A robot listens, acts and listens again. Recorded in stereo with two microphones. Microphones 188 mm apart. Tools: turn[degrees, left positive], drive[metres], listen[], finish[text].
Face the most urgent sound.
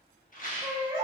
Thought: The baby crying: about 30° right or 150° right.
Action: turn[-30]
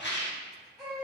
Action: finish[Facing the baby crying.]